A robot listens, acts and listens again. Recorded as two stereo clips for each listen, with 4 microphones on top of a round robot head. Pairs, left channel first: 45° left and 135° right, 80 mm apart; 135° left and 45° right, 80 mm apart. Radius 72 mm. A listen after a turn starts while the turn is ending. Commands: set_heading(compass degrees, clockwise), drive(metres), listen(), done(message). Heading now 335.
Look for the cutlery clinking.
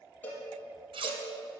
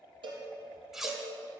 set_heading(105)
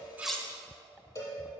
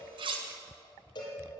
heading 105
listen()
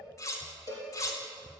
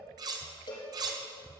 done("Facing the cutlery clinking.")